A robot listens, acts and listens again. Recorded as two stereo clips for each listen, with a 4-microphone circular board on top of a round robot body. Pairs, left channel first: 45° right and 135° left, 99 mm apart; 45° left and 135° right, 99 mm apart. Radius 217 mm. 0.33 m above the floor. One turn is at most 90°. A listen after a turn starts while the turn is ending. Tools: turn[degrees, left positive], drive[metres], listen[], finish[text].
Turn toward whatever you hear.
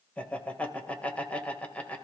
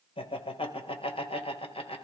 Thought: The laughter: 30° left.
Action: turn[30]
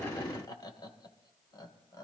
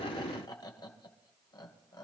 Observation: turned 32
Action: finish[Found it: laughter, straight ahead.]